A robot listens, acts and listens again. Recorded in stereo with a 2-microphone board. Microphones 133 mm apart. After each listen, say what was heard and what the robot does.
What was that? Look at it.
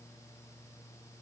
Keep listening.
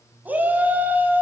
Turn 30° right.
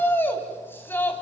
So it is at 15° left. Turn 15° left.
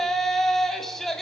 Found it: a shout, straight ahead, 2 to 4 m away.